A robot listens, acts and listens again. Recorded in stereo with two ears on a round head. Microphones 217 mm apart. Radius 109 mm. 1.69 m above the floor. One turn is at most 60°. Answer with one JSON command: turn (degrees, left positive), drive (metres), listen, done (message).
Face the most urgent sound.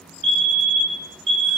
{"turn": -55}
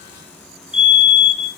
{"done": "Found it: a fire alarm, straight ahead, 2 to 4 m away."}